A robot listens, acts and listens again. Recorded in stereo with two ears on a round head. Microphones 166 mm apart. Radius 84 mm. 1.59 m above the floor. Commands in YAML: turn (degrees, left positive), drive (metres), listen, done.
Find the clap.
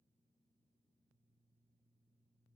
listen: true
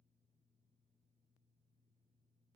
listen: true
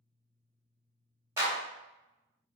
turn: -30
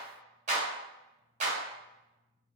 turn: -135
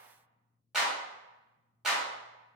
done: "Found it: a clap, straight ahead."